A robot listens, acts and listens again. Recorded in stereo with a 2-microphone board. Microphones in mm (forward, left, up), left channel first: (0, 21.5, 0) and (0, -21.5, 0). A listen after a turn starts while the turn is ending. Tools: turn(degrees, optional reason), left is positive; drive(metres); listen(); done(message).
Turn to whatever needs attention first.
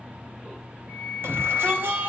turn(degrees=-70, reason="The shout: about 70° right or 110° right.")
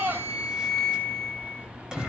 turn(degrees=-20, reason="So it is at 20° right.")
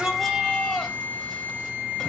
done("Found it: a shout, straight ahead, 2 to 4 m away.")